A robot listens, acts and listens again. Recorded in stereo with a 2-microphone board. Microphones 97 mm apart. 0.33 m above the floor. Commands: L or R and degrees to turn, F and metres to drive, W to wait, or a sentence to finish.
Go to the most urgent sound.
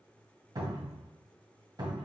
W
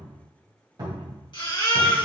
L55
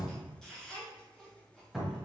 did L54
L10
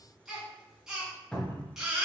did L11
F1.0
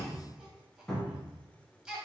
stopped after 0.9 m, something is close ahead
R10
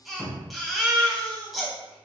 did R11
Arrived at the baby crying, straight ahead.